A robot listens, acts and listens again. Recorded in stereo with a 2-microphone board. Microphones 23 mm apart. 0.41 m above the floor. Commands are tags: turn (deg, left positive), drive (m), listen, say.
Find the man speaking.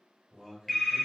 <turn deg="-25"/>
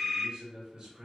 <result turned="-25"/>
<turn deg="-40"/>
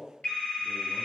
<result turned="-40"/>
<turn deg="-20"/>
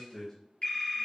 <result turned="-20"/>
<turn deg="25"/>
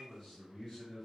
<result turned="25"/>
<turn deg="25"/>
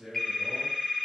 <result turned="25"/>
<say>Facing the man speaking.</say>